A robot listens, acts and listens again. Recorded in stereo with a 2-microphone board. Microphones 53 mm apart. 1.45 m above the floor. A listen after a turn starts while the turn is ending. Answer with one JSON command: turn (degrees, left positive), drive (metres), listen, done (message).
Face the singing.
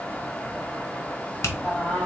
{"turn": 30}
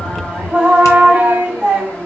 {"turn": -25}
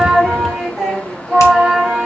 {"done": "Facing the singing."}